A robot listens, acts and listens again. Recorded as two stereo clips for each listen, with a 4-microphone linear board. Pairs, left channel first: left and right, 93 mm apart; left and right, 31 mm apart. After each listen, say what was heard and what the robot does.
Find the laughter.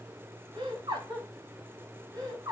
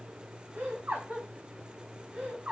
The laughter: about 45° right or 135° right. Turn 45° right.
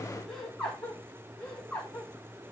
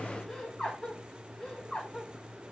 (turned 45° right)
So it is at 10° left. Turn 10° left.
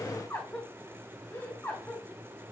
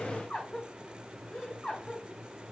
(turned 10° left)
The laughter is now 10° left. Turn 10° left.
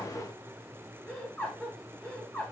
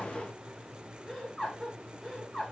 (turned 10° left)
Facing the laughter, over 4 m away.